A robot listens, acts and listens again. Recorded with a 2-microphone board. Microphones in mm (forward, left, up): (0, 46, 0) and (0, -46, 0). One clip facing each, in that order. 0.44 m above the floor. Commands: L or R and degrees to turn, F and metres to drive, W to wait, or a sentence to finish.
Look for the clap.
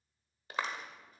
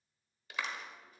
L35
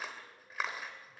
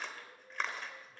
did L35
L10
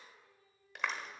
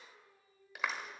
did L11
Facing the clap.